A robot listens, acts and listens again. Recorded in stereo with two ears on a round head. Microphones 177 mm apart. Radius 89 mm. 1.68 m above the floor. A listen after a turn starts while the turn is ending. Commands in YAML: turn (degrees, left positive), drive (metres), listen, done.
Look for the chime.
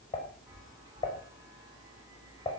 turn: -20
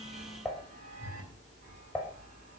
turn: -140
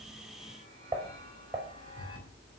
turn: 30
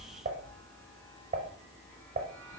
turn: 10
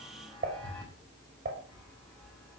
done: "Facing the chime, over 4 m away."